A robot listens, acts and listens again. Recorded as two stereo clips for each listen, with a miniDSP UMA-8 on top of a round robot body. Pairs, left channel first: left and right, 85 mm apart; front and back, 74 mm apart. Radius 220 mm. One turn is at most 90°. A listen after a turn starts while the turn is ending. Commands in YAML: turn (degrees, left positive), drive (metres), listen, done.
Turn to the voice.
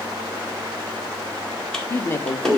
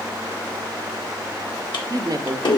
turn: 90
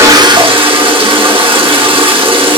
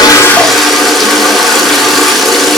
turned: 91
turn: 65
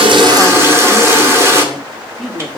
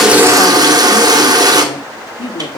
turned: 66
done: "Found it: a woman speaking, straight ahead."